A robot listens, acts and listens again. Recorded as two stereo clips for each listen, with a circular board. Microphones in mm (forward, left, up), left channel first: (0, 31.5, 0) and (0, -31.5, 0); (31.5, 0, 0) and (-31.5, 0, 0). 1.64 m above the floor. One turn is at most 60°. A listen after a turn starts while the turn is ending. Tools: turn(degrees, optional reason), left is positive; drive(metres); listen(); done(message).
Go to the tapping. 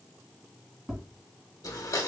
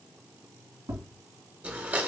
turn(degrees=-60, reason="The tapping: 175° right.")
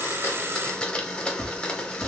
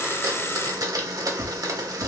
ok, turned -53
turn(degrees=-60, reason="The tapping is now 120° right.")
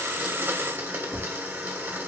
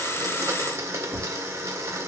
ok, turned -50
turn(degrees=-60, reason="The tapping is now 70° right.")
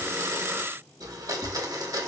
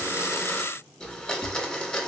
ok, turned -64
drive(metres=1.0)
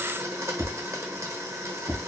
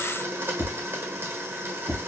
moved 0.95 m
drive(metres=1.0)
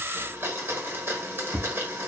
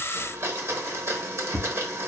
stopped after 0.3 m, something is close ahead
done("Arrived at the tapping, straight ahead.")